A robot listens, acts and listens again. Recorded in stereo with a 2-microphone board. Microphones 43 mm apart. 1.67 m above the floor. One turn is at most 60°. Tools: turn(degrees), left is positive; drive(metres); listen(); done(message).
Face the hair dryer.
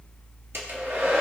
turn(degrees=-60)
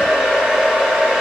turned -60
turn(degrees=-20)
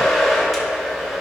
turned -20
done("Found it: a hair dryer, straight ahead.")